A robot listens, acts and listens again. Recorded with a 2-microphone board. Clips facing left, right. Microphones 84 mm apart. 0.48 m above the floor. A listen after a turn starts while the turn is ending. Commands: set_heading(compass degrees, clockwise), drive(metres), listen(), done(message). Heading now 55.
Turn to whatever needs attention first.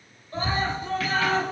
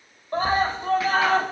set_heading(110)
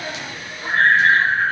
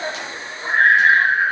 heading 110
set_heading(125)
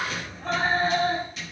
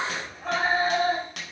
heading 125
done("Found it: a scream, straight ahead.")